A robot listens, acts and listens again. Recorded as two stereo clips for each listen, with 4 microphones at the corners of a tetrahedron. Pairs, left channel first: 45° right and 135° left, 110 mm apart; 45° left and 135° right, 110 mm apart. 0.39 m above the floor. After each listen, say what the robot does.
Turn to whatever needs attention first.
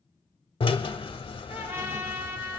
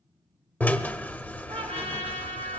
Keep listening.
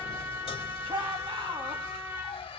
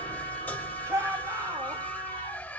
Turn 165° left.
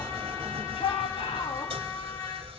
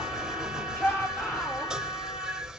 Turn 25° right.
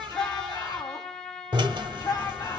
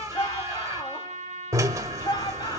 Found it: a shout, straight ahead.